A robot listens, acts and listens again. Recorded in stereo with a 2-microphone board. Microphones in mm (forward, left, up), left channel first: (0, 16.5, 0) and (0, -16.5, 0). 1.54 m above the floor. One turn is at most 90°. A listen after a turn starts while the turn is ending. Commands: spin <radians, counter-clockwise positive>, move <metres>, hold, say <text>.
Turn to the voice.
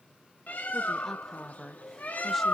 spin 0.52
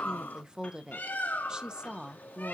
spin -0.44
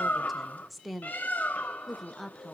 say Facing the woman speaking.